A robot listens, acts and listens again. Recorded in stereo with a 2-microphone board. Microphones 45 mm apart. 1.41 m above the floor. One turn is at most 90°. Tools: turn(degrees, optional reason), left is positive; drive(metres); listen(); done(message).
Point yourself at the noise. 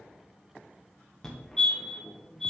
turn(degrees=30)
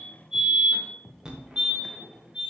turn(degrees=-20, reason="So it is at 20° right.")
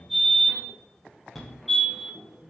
done("Found it: a fire alarm, straight ahead, 1 to 2 m away.")